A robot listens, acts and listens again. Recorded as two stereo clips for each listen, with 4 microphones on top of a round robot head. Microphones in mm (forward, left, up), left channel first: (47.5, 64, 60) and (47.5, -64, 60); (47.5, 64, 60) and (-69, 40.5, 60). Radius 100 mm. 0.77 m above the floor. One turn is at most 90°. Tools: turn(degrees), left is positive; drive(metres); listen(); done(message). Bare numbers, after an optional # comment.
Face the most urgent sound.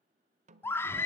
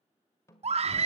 # The scream: 165° left.
turn(90)
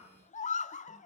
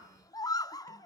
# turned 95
# The scream is now 70° left.
turn(70)
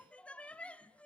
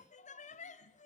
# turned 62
# The scream is now 10° left.
turn(10)
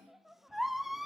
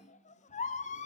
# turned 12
done("Found it: a scream, straight ahead.")